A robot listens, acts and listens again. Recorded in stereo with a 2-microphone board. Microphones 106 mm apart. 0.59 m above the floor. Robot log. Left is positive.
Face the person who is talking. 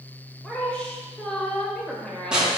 cmd yaw +30
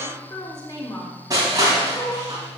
note: So it is at 140° left.
cmd yaw +140
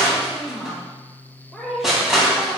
end: Found it: a woman speaking, straight ahead, 2 to 4 m away.